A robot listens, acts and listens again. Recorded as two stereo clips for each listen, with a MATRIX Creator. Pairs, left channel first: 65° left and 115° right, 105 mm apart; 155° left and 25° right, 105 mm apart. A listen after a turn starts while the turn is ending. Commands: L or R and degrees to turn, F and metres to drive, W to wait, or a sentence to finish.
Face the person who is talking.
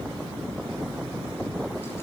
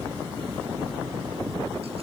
W
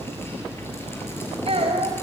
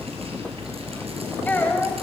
R130
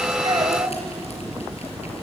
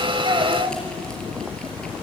W
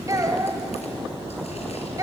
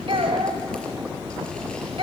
R55
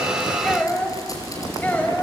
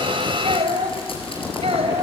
R10
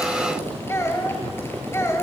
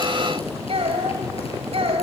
Found it: a child speaking, straight ahead, 1 to 2 m away.